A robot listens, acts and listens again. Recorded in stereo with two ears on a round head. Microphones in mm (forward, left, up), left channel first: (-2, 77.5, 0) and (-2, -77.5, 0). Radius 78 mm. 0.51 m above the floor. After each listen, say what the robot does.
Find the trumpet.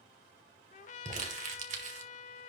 Turn 45° left.
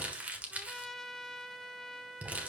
Found it: a trumpet, straight ahead, under 1 m away.